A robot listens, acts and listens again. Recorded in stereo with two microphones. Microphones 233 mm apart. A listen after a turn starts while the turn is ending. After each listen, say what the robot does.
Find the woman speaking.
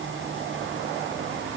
Keep listening.
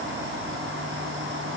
Keep listening.
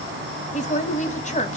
Turn 30° left.
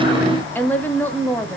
Turn 10° left.
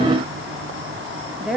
Facing the woman speaking.